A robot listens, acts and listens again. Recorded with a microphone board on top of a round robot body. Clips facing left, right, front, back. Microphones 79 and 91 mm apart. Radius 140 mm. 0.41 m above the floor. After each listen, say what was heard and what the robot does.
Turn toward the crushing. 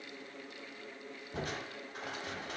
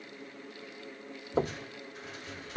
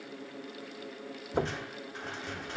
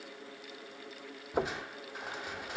The crushing: 100° left. Turn 100° left.
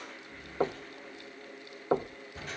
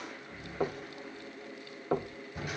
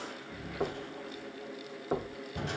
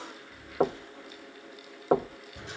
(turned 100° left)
The crushing is now 10° right. Turn 10° right.
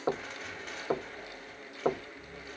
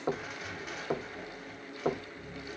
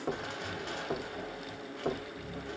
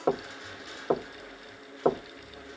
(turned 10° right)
Facing the crushing.